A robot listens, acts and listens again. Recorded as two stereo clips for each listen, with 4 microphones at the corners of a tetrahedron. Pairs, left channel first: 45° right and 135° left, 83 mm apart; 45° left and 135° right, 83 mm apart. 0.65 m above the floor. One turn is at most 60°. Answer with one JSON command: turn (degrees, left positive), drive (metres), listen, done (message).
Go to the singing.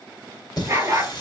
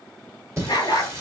{"turn": -60}
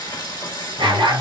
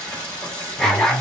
{"turn": -30}
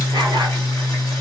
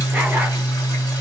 {"drive": 1.0}
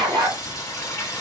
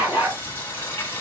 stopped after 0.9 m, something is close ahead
{"turn": -10}
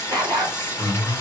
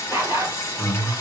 {"done": "I am next to the singing."}